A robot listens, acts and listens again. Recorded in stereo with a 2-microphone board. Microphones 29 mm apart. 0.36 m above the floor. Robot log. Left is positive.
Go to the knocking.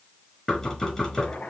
note: The knocking: about 20° left or 160° left.
cmd yaw +20
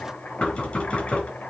note: So it is at 140° left.
cmd yaw +140
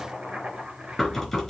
note: The knocking is now 15° left.
cmd yaw +15
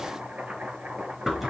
cmd fwd 1.0
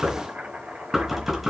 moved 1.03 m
cmd fwd 1.0
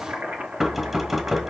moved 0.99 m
cmd fwd 1.0
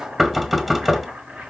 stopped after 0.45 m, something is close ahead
end: Arrived at the knocking, straight ahead.